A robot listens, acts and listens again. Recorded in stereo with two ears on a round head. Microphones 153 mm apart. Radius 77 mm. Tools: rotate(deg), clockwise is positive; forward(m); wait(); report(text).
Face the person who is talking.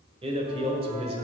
rotate(35)
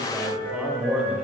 rotate(10)
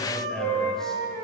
wait()
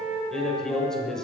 report("Facing the man speaking, 1 to 2 m away.")